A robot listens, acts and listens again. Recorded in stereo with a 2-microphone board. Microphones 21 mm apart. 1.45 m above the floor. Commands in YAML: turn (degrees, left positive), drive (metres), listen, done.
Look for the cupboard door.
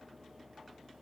listen: true
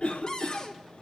turn: 30
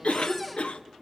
listen: true
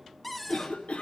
done: "Found it: a cupboard door, straight ahead, 1 to 2 m away."